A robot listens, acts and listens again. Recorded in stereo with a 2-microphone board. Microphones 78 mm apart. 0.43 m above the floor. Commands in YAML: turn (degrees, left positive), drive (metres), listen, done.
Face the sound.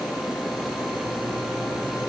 listen: true
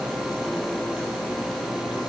listen: true
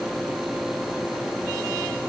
done: "I can't make out anything to turn to."